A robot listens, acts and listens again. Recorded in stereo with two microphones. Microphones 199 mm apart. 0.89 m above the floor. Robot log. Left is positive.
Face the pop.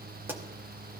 cmd yaw -30
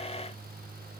cmd idle
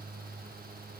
end: I heard a pop, but can't make it out now. It was about 20° left or 140° right.